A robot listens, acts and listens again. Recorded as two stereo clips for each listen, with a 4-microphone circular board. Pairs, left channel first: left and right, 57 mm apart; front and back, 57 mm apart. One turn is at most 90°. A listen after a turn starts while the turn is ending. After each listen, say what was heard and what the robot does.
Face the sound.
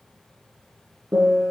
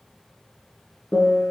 The piano: 55° right. Turn 55° right.
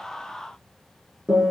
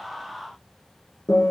The piano is now 15° right. Turn 15° right.
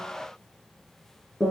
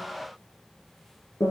Facing the piano, 2 to 4 m away.